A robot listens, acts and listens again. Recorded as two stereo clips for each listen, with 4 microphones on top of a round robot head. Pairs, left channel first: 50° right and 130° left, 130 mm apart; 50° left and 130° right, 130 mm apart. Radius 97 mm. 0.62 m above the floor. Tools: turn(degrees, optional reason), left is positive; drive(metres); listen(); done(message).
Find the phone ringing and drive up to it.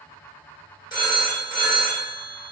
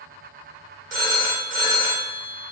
turn(degrees=-110, reason="The phone ringing: 110° right.")
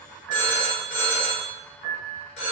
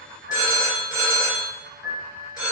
turn(degrees=-15, reason="The phone ringing is now 15° right.")
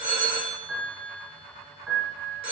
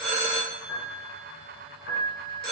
drive(metres=1.0)
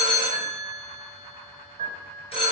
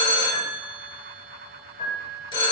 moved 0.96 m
drive(metres=1.0)
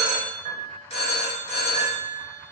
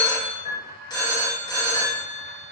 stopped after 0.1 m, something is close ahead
turn(degrees=-10, reason="The phone ringing is now 10° right.")
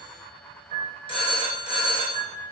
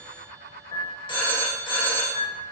done("Arrived at the phone ringing, straight ahead.")